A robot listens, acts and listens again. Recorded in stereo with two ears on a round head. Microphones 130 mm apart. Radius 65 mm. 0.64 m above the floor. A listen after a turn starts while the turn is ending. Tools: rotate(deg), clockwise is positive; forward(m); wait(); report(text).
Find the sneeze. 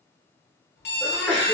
rotate(-30)
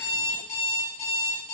wait()
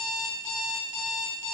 report("I heard a sneeze, but can't make it out now. It was about 20° right or 140° left.")